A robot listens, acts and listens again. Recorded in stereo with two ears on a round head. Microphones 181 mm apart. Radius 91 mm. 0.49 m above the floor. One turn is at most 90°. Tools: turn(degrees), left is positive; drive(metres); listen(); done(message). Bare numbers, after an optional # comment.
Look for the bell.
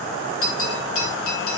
turn(90)
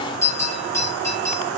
# So it is at 15° left.
turn(15)
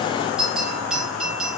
done("Facing the bell.")